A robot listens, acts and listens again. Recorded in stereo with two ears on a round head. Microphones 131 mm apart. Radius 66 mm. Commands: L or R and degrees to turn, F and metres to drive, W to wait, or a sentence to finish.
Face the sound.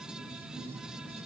W
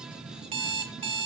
R35
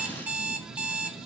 R10
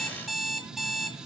Facing the alarm clock, 1 to 2 m away.